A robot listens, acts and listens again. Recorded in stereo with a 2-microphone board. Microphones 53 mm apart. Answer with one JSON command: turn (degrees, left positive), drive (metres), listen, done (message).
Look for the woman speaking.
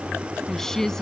{"turn": 30}
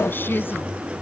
{"turn": 140}
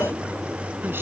{"listen": true}
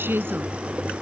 {"turn": -40}
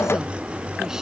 {"listen": true}
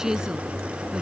{"turn": -10}
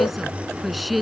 {"done": "Facing the woman speaking."}